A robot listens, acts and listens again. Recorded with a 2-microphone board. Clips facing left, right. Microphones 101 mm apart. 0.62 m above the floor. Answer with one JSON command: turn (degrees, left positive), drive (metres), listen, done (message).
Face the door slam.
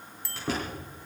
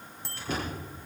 {"turn": 70}
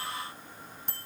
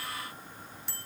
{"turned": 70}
{"listen": true}
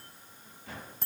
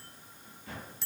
{"done": "I heard a door slam, but can't make it out now. It was about straight ahead or 40° left."}